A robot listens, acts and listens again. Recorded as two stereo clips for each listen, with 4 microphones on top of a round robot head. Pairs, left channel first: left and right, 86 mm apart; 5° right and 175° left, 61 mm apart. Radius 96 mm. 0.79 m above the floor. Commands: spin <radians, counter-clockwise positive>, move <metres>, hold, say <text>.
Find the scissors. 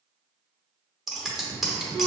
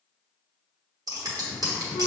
spin 3.14
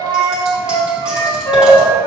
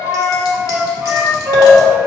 hold
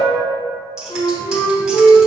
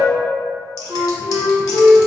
hold
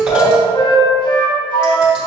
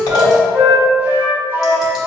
say I heard scissors from this way, but can't make it out now.